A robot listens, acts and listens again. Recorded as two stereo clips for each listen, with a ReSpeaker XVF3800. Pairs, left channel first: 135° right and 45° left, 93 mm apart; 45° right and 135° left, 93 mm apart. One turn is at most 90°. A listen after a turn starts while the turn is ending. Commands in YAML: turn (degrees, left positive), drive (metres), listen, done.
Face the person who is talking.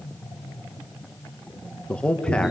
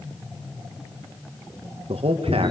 turn: 90
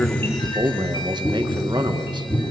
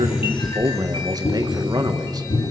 turn: 85
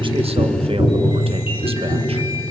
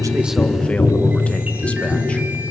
listen: true
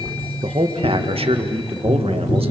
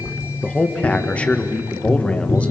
turn: 30
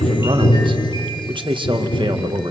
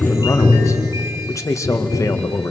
turn: 10
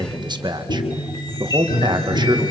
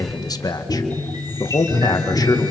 done: "Found it: a man speaking, straight ahead, 1 to 2 m away."